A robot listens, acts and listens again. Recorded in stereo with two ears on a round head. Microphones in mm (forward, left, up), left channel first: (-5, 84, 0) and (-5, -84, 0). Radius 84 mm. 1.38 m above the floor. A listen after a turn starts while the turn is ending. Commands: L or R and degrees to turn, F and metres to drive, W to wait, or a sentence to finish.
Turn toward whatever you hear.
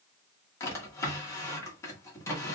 L15
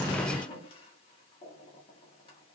L150
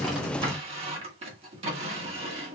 R35
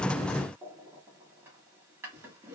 R15
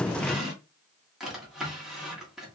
Facing the drawer, 1 to 2 m away.